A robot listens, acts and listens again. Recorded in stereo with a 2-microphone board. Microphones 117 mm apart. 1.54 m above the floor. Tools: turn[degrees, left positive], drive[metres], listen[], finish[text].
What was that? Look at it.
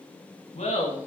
Action: turn[90]
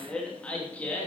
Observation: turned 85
Thought: So it is at 15° left.
Action: turn[15]
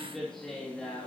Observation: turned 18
Thought: The laughter is now 10° left.
Action: turn[10]
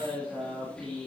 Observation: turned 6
Thought: The laughter is now 10° left.
Action: turn[10]
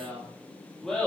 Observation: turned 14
Action: finish[Found it: laughter, straight ahead.]